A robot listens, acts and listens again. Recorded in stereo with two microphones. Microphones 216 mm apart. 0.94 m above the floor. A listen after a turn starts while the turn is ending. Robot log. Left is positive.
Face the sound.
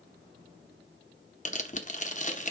note: The tearing paper: about 35° left or 145° left.
cmd yaw +35
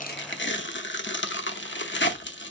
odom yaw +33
note: So it is at 105° left.
cmd yaw +105
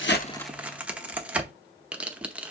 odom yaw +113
end: Found it: tearing paper, straight ahead.